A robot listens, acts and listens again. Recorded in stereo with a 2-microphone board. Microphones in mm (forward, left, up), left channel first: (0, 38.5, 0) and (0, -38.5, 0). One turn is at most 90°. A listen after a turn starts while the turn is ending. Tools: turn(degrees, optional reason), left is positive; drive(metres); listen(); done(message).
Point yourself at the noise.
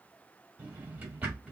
turn(degrees=-20, reason="The drawer: about 20° right or 160° right.")
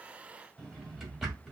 done("Found it: a drawer, straight ahead.")